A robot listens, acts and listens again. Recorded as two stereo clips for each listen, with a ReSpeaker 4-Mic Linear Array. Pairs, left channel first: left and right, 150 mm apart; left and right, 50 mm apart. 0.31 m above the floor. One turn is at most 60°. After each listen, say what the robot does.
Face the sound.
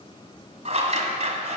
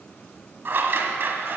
Turn 50° right.
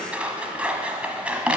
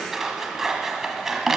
Turn 10° right.
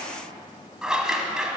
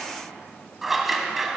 Found it: scissors, straight ahead.